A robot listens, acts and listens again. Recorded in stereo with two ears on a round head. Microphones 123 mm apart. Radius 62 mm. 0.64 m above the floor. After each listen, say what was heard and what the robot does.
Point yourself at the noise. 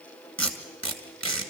Turn 30° left.
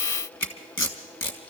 So it is at 145° left. Turn 145° left.
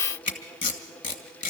The tape being pulled is now 35° left. Turn 35° left.
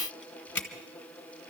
The tape being pulled is now 10° left. Turn 10° left.
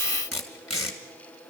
Facing the tape being pulled.